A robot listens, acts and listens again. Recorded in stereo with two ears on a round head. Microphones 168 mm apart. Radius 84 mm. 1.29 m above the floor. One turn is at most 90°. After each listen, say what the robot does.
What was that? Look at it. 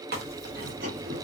Turn 55° right.
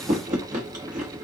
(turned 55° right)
Turn 50° right.
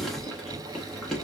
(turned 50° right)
Facing the chewing.